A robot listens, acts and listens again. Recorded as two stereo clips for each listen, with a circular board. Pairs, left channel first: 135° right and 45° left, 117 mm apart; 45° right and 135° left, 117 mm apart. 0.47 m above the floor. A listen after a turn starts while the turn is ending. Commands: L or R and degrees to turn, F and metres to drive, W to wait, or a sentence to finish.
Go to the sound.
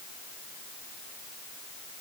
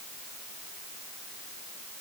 W
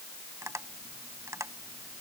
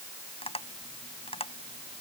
R20
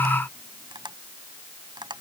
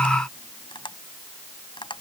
F1.0
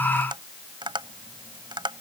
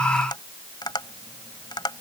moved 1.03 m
F1.0
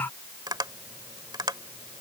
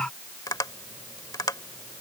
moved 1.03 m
F1.0
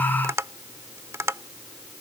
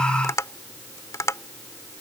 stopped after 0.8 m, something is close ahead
Arrived at the tapping, straight ahead.